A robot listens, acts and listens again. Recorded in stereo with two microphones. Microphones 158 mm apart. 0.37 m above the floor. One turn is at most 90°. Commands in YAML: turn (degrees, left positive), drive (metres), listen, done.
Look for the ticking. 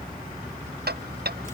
turn: -90
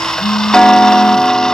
done: "Found it: ticking, straight ahead."